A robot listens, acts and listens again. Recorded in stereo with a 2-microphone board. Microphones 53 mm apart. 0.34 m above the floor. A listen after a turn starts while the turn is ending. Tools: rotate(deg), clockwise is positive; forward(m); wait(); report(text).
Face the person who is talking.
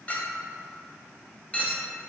wait()
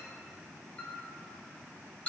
wait()
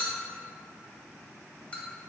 report("I can't make out anyone speaking, only a clink.")